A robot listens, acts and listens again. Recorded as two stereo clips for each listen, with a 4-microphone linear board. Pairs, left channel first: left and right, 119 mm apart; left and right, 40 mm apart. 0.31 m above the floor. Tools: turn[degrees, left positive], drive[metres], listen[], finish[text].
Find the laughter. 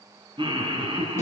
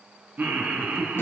Thought: The laughter: about 45° right or 135° right.
Action: turn[-45]
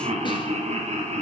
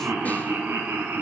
Thought: So it is at 85° right.
Action: turn[-85]
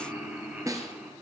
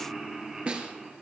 Thought: The laughter is now 15° right.
Action: turn[-15]
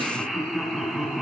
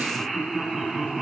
Action: finish[Facing the laughter.]